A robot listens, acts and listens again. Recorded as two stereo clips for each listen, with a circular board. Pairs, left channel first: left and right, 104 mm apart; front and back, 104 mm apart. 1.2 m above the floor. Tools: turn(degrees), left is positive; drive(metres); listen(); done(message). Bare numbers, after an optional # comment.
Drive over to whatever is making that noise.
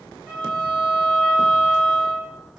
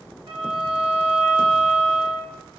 # The violin: 165° right.
turn(-165)
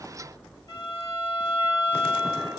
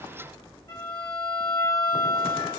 # The violin is now 40° left.
turn(40)
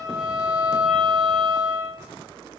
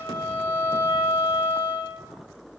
drive(1.0)
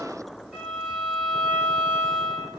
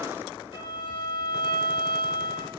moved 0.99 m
# The violin is now 10° right.
turn(-10)
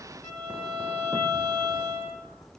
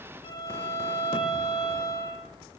drive(1.0)
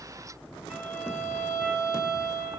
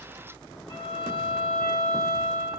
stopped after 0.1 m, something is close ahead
# The violin is now 20° right.
turn(-20)
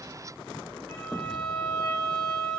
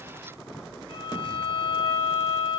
done("Arrived at the violin, straight ahead.")